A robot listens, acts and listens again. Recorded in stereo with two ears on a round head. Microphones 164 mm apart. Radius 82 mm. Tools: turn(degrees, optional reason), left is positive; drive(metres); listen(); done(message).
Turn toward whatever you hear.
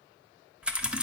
turn(degrees=-30)
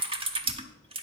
turn(degrees=-145, reason="So it is at 145° right.")
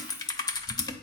turn(degrees=25, reason="The typing on a keyboard is now 25° left.")
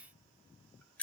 turn(degrees=10, reason="The typing on a keyboard is now 10° left.")
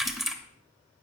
done("Facing the typing on a keyboard.")